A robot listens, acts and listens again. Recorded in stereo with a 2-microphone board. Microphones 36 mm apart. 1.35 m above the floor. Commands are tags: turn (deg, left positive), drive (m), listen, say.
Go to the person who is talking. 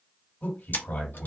<turn deg="60"/>
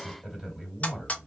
<drive m="1.0"/>
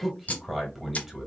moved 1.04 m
<drive m="1.0"/>
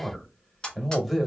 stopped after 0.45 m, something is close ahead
<say>I am next to the man speaking.</say>